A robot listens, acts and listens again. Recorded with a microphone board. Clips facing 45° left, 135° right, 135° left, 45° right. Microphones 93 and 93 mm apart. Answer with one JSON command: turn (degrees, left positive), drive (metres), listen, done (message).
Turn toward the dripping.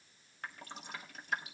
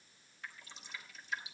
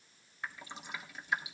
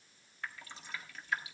{"turn": 65}
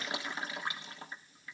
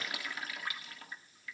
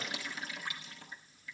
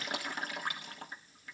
{"turn": -15}
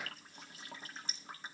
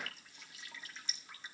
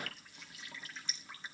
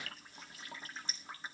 {"done": "Facing the dripping."}